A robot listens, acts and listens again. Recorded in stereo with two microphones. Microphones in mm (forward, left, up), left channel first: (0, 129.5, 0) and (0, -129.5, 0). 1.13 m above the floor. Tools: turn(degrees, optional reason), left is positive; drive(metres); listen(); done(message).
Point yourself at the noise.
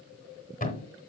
turn(degrees=30, reason="The thud: about 30° left or 150° left.")
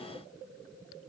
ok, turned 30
listen()
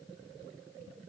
done("I heard a thud, but can't make it out now. It was about straight ahead or 120° left.")